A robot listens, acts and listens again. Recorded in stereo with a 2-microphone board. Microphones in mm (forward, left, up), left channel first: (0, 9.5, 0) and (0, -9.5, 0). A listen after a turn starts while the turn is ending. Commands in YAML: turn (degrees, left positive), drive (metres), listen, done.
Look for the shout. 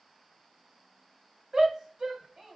turn: -55
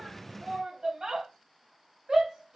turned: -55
turn: -50
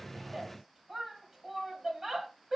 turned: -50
turn: -15
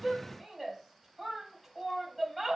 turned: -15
done: "Found it: a shout, straight ahead."